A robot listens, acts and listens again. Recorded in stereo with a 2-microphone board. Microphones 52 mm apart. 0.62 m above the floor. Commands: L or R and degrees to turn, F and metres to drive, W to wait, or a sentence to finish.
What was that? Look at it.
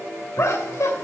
L60
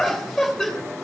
Facing the laughter, 2 to 4 m away.